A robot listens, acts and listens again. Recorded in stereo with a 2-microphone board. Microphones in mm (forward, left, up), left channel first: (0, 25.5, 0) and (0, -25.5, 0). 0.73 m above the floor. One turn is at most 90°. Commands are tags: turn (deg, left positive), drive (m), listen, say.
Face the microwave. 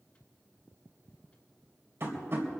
<listen/>
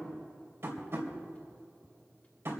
<listen/>
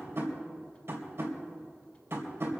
<say>I can't make out a microwave, only tapping.</say>